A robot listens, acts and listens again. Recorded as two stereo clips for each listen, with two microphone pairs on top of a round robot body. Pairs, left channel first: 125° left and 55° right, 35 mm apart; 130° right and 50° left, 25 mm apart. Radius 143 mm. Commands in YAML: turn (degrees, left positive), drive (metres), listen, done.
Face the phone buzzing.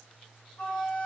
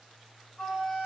listen: true
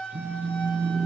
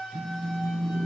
turn: -30
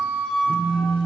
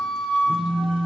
done: "Found it: a phone buzzing, straight ahead."